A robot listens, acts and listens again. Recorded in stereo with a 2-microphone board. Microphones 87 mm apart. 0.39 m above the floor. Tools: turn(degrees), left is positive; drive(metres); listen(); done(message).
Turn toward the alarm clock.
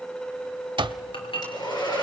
turn(degrees=-60)
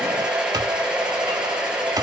turn(degrees=-50)
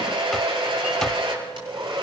done("Facing the alarm clock.")